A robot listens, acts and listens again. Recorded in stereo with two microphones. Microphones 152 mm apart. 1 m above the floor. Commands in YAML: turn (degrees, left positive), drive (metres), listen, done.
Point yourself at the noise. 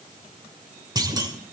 turn: -25
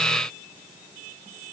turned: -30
listen: true
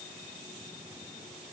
done: "I heard a clunk, but can't make it out now. It was about 5° left or 125° right."